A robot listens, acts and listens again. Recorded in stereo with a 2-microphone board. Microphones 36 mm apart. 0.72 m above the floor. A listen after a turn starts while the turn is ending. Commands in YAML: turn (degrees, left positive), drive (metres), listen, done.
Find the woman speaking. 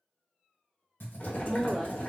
turn: 20
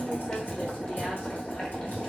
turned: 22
listen: true
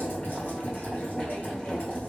listen: true
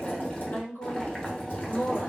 turn: 110
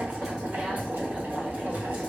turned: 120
turn: -10
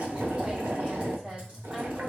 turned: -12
turn: -10
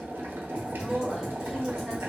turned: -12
done: "Found it: a woman speaking, straight ahead, 2 to 4 m away."